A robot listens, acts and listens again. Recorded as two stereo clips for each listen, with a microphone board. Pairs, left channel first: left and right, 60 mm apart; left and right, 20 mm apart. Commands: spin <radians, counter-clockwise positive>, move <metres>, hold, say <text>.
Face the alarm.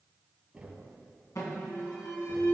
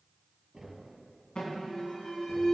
spin 1.22
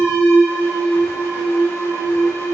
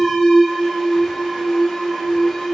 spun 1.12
spin 0.79
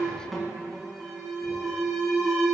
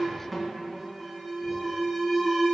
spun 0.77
say Facing the alarm.